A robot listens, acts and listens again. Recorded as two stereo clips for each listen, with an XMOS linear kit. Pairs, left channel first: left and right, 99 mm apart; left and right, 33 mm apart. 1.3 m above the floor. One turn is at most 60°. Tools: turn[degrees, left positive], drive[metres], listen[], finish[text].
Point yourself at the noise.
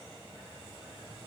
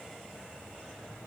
Action: listen[]
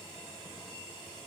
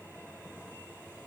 Action: listen[]
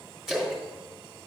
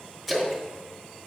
Action: turn[-30]
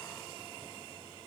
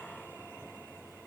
Action: listen[]
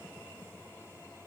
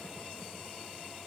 Action: finish[I heard a splash, but can't make it out now. It was about 25° left or 145° right.]